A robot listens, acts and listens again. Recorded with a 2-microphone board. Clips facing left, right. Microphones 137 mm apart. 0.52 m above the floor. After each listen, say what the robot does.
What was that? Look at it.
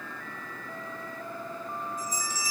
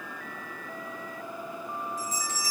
Turn 90° right.
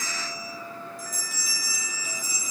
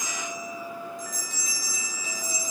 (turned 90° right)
Facing the bell.